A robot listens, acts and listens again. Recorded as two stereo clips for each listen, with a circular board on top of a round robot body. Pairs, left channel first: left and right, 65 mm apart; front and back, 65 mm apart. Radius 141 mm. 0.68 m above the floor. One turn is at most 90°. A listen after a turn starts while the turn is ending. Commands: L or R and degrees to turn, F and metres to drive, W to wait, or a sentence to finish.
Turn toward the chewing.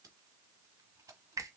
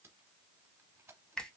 W
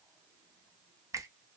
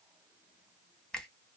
W
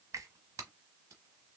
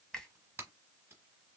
I can't make out chewing to turn to.